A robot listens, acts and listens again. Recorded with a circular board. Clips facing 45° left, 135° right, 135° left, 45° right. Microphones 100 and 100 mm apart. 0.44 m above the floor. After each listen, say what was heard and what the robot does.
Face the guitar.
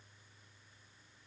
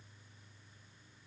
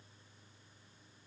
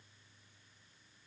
Keep listening.
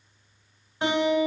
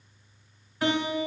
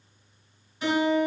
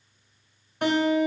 The guitar: 20° right. Turn 20° right.
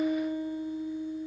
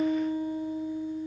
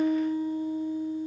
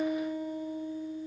Facing the guitar.